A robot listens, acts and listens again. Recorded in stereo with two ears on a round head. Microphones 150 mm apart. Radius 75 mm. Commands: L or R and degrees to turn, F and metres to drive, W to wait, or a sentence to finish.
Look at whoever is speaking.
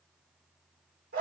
W
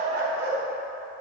W
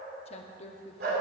L40
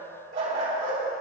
W
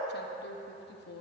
L95
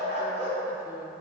W
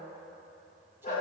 W
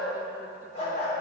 Facing where the woman speaking came from. I can't hear it now.